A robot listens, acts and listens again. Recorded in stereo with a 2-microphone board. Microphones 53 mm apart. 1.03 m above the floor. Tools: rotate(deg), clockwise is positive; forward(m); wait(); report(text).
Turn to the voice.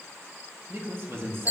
rotate(50)
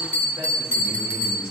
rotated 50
wait()
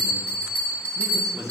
rotate(80)
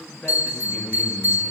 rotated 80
rotate(-15)
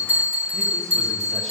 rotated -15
wait()
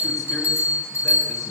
wait()
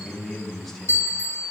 report("Facing the man speaking.")